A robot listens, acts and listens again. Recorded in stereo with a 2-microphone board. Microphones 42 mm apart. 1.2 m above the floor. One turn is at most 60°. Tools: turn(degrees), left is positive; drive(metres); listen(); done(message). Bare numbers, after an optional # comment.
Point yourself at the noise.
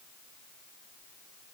listen()
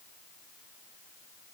listen()
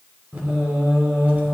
# The singing: about 35° right or 145° right.
turn(-35)
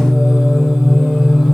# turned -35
done("Facing the singing.")